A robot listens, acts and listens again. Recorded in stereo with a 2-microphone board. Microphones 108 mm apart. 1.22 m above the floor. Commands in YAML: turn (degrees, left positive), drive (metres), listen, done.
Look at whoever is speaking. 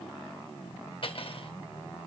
listen: true
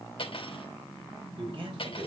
turn: -45
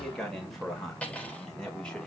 turn: 10
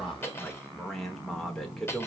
done: "Found it: a man speaking, straight ahead."